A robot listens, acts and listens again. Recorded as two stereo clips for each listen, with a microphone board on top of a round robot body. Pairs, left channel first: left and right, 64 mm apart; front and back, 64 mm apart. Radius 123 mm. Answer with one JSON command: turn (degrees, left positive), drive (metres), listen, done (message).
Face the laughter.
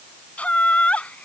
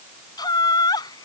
{"turn": 20}
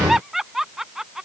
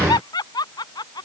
{"done": "Facing the laughter."}